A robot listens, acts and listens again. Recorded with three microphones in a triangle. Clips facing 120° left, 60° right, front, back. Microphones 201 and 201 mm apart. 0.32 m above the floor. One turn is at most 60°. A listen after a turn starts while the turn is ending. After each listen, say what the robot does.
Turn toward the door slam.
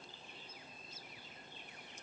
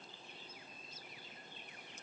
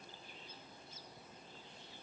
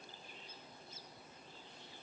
Keep listening.
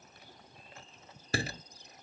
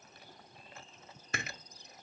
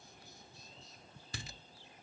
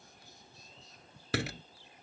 Turn 60° left.
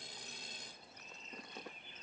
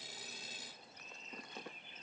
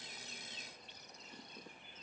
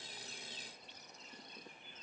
Turn 60° left.
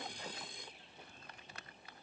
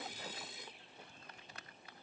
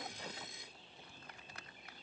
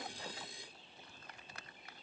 Turn 55° left.
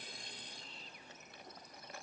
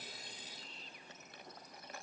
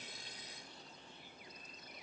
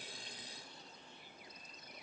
Facing where the door slam came from. I can't hear it now.